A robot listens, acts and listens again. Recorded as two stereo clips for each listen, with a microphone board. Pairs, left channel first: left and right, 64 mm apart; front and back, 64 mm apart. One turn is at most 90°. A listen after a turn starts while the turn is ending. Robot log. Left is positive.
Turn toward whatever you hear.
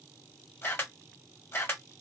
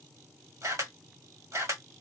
note: The camera shutter: 150° left.
cmd yaw +90
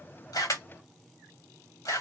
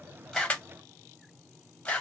note: The camera shutter is now 70° left.
cmd yaw +70
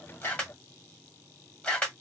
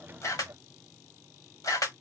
note: The camera shutter is now 20° left.
cmd yaw +20
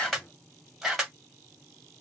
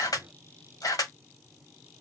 end: Facing the camera shutter, 1 to 2 m away.